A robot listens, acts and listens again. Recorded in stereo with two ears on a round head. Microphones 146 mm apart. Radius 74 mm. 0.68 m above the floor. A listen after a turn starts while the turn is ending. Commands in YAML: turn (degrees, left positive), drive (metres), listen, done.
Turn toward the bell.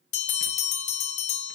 turn: 45
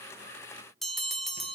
done: "Facing the bell."